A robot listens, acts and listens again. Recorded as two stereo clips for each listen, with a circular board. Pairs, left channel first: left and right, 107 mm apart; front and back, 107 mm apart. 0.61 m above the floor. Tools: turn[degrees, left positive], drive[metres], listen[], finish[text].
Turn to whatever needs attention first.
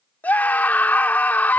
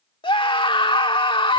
Thought: The scream: 20° left.
Action: turn[20]
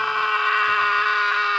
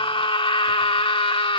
Action: finish[Facing the scream.]